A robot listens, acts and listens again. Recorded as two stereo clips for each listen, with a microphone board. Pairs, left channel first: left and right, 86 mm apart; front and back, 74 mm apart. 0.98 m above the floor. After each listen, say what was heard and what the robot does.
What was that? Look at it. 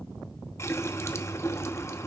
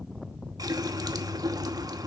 The running tap: 150° left. Turn 150° left.
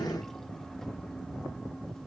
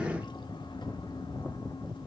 Keep listening.
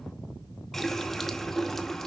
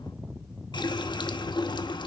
Facing the running tap, 1 to 2 m away.